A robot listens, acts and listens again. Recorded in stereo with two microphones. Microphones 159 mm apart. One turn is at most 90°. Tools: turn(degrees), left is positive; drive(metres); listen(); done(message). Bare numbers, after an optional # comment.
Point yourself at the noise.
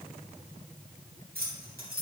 # The keys jangling: about 70° right or 110° right.
turn(-70)
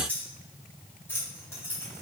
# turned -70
# So it is at 15° left.
turn(15)
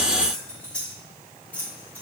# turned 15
# The keys jangling is now 10° left.
turn(10)
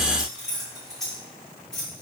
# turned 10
done("Found it: keys jangling, straight ahead.")